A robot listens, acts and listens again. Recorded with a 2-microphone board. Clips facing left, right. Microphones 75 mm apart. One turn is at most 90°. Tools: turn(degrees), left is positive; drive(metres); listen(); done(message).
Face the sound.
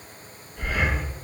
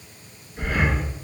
turn(degrees=-45)
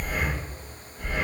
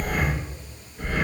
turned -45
turn(degrees=-80)
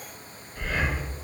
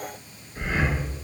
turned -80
turn(degrees=-30)
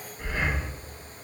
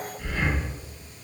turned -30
turn(degrees=25)
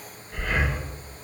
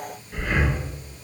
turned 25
done("Found it: breathing, straight ahead, 1 to 2 m away.")